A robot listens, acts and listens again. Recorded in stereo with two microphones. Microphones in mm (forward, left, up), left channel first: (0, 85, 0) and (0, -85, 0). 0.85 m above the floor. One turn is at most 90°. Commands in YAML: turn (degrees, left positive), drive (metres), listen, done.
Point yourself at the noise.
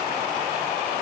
listen: true
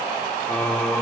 turn: 30
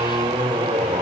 turn: -35
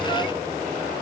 listen: true
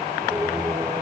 turn: -15
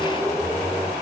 done: "Facing the singing."